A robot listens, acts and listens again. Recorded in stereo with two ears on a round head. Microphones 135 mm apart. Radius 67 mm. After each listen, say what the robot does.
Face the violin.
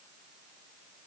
Keep listening.
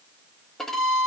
Turn 30° left.
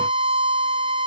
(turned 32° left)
Turn 30° right.
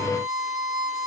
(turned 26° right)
Found it: a violin, straight ahead, under 1 m away.